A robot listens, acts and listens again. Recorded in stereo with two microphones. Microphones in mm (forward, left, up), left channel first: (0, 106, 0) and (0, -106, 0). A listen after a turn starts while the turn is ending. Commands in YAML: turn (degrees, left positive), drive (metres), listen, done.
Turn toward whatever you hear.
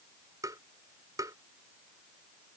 turn: -15
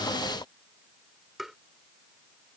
done: "Found it: tapping, straight ahead."